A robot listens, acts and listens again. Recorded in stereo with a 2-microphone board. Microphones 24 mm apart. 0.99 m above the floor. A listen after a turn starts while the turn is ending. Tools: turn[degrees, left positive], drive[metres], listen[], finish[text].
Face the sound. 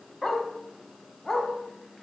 Action: turn[30]
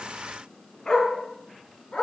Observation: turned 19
Thought: So it is at 150° left.
Action: turn[150]
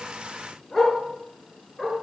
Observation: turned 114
Thought: The dog barking is now 35° left.
Action: turn[35]
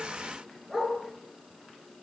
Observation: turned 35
Action: finish[Found it: a dog barking, straight ahead.]